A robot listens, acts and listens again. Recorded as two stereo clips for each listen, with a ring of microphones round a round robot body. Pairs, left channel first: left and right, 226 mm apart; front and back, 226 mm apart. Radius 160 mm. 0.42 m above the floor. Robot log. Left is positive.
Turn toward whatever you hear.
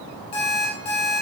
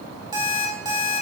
note: The alarm clock: 105° left.
cmd yaw +105
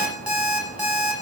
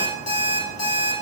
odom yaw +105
end: Facing the alarm clock.